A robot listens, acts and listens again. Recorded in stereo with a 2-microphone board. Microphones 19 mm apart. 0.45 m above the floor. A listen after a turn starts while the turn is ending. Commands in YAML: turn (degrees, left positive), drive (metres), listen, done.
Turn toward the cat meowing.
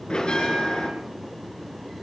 listen: true
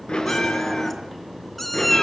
turn: 15
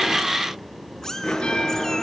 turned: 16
turn: 145
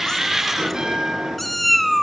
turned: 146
done: "Facing the cat meowing."